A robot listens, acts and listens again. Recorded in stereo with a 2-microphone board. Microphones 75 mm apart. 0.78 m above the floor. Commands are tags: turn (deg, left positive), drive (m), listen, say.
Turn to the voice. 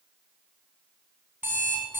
<listen/>
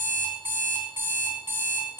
<listen/>
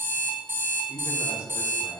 <turn deg="45"/>
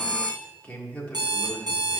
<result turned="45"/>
<turn deg="20"/>
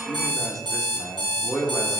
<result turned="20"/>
<say>Facing the man speaking.</say>